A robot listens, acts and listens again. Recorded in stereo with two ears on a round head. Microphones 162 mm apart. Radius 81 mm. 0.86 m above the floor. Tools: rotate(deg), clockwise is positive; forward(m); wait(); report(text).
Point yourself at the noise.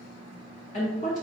rotate(-40)
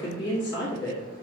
rotate(-95)
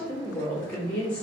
rotate(-10)
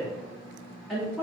report("Facing the woman speaking.")